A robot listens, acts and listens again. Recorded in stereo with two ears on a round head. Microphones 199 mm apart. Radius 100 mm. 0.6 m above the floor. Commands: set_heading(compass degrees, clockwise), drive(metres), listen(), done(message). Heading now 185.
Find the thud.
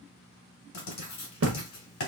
set_heading(245)
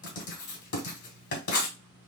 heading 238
listen()
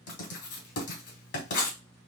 done("I heard a thud, but can't make it out now. It was about 5° right or 70° right.")